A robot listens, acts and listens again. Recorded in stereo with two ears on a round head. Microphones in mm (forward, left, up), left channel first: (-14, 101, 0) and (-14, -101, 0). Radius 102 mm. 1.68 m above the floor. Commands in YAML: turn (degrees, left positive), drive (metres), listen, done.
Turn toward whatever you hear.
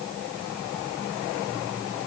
listen: true
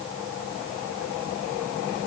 listen: true
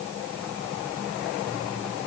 done: "I can't make out anything to turn to."